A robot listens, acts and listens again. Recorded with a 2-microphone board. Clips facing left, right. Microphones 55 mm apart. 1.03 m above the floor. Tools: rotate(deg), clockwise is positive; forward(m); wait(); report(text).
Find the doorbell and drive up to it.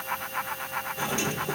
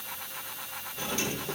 rotate(-25)
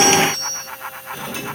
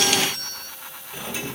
forward(1.0)
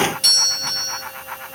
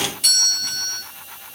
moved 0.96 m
forward(1.0)
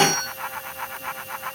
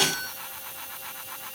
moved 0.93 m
forward(1.0)
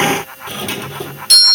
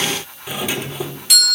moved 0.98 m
forward(1.0)
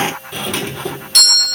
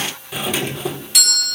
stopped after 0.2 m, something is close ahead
report("I am next to the doorbell.")